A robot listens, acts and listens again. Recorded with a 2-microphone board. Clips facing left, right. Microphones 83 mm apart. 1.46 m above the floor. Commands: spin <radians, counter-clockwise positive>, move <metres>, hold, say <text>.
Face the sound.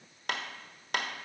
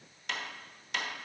spin 0.87
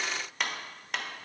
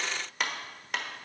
say Found it: a clap, straight ahead.